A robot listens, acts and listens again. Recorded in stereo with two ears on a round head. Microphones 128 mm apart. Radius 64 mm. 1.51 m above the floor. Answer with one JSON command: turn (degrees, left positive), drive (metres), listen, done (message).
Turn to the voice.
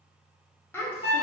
{"turn": 15}
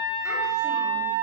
{"listen": true}
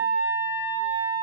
{"listen": true}
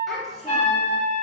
{"done": "Found it: a child speaking, straight ahead, under 1 m away."}